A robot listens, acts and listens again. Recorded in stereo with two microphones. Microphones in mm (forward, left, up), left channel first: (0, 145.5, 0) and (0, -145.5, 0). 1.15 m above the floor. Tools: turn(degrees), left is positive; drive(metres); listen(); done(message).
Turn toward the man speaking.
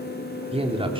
turn(degrees=-20)
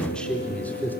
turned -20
done("Facing the man speaking.")